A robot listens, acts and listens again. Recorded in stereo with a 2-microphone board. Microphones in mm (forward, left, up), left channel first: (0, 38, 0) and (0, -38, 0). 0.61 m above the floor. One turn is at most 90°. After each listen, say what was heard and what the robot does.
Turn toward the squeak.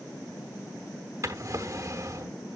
Keep listening.
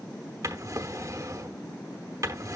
Keep listening.
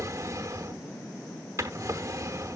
I can't make out a squeak, only a drawer.